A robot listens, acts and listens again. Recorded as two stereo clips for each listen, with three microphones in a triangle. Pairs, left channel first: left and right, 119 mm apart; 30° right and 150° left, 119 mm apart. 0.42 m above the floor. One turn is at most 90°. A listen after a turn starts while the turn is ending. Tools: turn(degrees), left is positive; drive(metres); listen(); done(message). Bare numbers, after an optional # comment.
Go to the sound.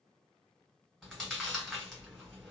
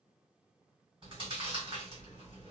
# The chewing: straight behind.
turn(90)
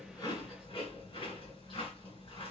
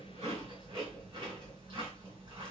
# The chewing is now 115° left.
turn(90)
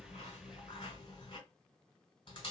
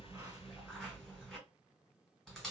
# The chewing is now 60° left.
turn(60)
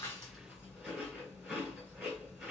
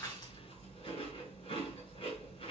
# The chewing is now 10° right.
turn(-10)
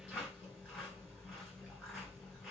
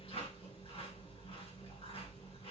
drive(1.0)
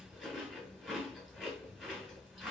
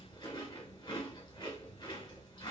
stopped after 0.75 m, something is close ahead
done("Arrived at the chewing, straight ahead.")